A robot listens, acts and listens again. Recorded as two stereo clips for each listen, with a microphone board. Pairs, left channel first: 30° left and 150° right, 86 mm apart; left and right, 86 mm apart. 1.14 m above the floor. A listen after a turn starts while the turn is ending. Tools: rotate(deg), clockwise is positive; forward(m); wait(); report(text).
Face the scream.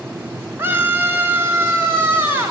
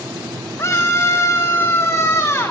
rotate(-145)
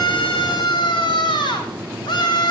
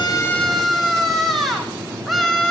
report("Facing the scream, over 4 m away.")